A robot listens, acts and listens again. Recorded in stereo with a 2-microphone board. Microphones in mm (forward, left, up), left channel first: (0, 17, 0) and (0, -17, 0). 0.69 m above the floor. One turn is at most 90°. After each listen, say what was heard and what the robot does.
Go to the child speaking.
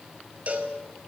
Keep listening.
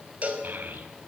The child speaking: about 65° right or 115° right. Turn 65° right.
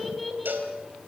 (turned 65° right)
Drive 1.0 m forward.
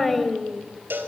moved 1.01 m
Drive 1.0 m forward.
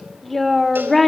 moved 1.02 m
Drive 1.0 m forward.
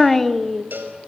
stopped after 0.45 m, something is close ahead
Arrived at the child speaking, straight ahead.